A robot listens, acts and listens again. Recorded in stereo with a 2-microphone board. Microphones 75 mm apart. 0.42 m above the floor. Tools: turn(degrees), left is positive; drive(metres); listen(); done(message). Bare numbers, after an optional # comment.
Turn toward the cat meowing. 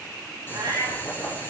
# The cat meowing: about 65° right or 115° right.
turn(-65)
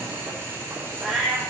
done("Found it: a cat meowing, straight ahead, over 4 m away.")